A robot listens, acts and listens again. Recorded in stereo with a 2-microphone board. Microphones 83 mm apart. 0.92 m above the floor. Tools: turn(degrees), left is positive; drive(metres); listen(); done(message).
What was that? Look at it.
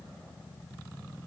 listen()
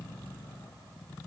listen()
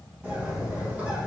turn(degrees=-20)
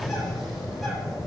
done("Found it: a bird, straight ahead, 1 to 2 m away.")